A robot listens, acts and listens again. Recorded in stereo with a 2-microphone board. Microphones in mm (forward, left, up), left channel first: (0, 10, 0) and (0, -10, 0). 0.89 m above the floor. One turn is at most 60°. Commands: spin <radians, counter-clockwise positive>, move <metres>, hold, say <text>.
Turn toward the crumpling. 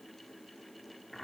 hold
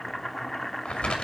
spin 1.05
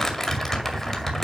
spin 0.35
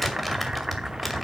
say Facing the crumpling, 2 to 4 m away.